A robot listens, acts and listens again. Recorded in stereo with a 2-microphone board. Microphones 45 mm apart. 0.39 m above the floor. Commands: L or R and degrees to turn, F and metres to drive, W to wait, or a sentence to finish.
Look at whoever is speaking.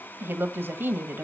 R55
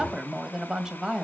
R15
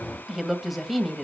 Facing the woman speaking, 1 to 2 m away.